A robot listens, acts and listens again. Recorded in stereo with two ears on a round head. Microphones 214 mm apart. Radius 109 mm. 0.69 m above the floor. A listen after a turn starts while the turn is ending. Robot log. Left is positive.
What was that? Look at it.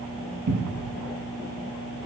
cmd yaw -90
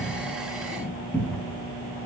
end: Facing the cupboard door.